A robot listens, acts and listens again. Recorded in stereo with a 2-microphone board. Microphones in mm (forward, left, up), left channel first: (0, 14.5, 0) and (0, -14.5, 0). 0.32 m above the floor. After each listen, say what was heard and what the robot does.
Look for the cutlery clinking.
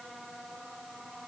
Keep listening.
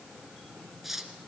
Turn 30° right.
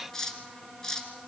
So it is at 25° left. Turn 25° left.
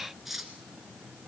Found it: cutlery clinking, straight ahead, 2 to 4 m away.